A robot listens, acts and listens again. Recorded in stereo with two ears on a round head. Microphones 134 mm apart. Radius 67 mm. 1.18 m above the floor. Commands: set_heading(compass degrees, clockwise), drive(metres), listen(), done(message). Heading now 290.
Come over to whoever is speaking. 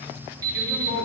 set_heading(0)
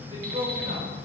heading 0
set_heading(35)
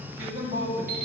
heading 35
set_heading(55)
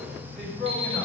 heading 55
drive(1.0)
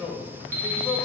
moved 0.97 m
drive(1.0)
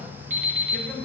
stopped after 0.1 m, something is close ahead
done("I am next to the man speaking.")